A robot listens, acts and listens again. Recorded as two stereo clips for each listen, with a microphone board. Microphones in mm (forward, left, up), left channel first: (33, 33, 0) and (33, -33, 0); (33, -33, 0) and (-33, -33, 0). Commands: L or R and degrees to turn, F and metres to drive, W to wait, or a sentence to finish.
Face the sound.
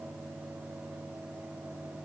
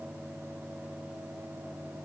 W
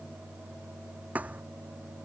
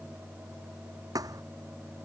R160
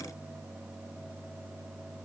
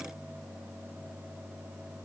I heard a thud from this way, but can't make it out now.